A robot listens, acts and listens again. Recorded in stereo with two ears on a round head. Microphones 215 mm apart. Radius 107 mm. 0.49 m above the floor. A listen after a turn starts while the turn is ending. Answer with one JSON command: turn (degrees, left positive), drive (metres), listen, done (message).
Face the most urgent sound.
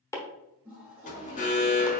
{"turn": 30}
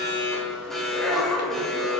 {"done": "Found it: an alarm, straight ahead."}